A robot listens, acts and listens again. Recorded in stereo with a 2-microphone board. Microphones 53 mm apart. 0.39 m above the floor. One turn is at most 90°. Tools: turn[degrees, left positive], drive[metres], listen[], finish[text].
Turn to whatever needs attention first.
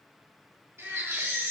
Thought: The baby crying: about 75° right or 105° right.
Action: turn[-75]
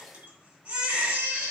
Thought: So it is at 30° right.
Action: turn[-30]
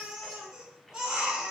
Thought: The baby crying is now 15° right.
Action: turn[-15]
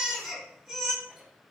Action: finish[Found it: a baby crying, straight ahead.]